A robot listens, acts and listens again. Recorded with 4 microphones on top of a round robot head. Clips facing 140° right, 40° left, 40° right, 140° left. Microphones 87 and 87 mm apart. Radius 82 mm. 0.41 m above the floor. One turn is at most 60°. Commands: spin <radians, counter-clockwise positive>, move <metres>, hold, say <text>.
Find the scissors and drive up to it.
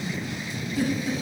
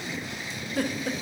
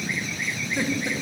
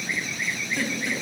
hold
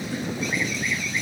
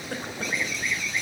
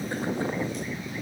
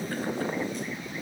hold
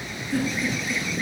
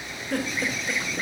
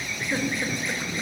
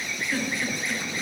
say I can't make out scissors to turn to.